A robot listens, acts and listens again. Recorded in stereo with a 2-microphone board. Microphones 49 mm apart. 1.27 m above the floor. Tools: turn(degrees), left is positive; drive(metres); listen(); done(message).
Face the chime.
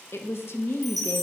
turn(degrees=30)
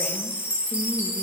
turn(degrees=-30)
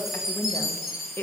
turn(degrees=-10)
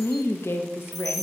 listen()
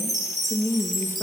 done("Facing the chime, 1 to 2 m away.")